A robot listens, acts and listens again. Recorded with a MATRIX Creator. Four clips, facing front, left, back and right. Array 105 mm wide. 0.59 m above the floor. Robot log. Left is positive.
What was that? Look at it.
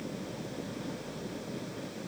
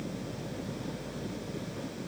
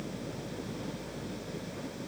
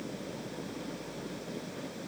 cmd idle
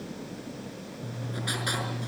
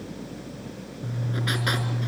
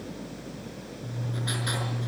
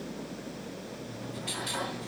note: The writing: 85° left.
cmd yaw +85
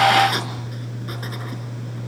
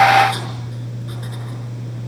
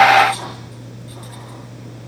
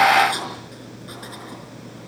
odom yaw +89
end: Facing the writing, over 4 m away.